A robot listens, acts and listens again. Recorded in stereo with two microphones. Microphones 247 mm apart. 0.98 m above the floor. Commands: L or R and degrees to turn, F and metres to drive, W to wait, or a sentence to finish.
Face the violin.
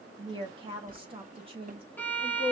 L30
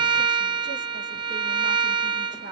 R20
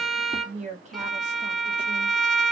Facing the violin.